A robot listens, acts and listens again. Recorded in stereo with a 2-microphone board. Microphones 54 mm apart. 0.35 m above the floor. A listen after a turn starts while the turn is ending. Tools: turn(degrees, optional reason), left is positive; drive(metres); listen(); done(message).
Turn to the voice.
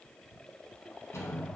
listen()
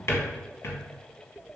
listen()
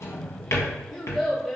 turn(degrees=30)
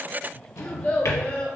turn(degrees=150, reason="So it is at 150° left.")
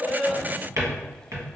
listen()
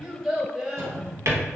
turn(degrees=-15, reason="The child speaking is now 15° right.")
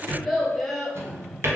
done("Facing the child speaking.")